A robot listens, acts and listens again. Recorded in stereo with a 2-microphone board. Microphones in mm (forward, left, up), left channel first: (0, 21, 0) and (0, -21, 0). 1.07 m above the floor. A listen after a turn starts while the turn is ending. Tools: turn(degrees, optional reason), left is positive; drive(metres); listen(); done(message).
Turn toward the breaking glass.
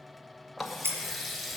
turn(degrees=-90)
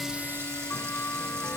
done("I heard breaking glass from this way, but can't make it out now.")